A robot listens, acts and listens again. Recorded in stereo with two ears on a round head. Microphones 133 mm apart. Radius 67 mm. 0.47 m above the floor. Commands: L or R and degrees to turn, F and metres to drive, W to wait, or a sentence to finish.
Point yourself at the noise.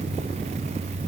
W
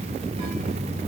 W
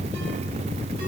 I can't make out anything.